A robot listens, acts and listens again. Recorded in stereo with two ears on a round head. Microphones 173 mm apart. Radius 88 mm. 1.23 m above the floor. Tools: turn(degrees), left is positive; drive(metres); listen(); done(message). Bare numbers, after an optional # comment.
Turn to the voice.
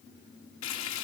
listen()
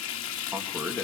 turn(30)
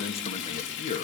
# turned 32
# So it is at 140° left.
turn(140)
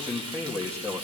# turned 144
# The man speaking is now 15° right.
turn(-15)
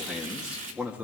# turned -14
# The man speaking is now 10° right.
turn(-10)
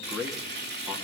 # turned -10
done("Found it: a man speaking, straight ahead.")